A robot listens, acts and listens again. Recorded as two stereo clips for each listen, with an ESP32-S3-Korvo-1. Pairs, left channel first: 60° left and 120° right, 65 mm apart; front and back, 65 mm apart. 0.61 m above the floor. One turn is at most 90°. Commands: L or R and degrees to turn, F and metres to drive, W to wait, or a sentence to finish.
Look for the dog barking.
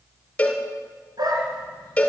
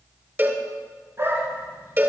R90
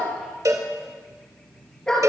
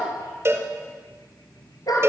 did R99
R20
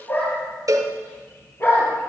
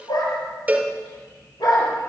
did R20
Facing the dog barking, over 4 m away.